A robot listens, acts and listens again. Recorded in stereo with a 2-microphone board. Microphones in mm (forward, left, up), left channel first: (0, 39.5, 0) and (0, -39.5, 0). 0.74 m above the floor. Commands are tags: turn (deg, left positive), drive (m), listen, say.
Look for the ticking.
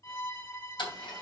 <turn deg="90"/>
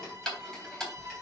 <say>Facing the ticking.</say>